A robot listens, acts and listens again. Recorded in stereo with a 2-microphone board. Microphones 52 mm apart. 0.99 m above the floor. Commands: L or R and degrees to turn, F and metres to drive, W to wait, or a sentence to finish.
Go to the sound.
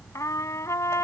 L90
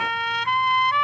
F1.0
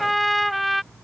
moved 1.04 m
F1.0
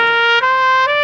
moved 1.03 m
F1.0
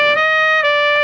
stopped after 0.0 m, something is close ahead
I am next to the trumpet.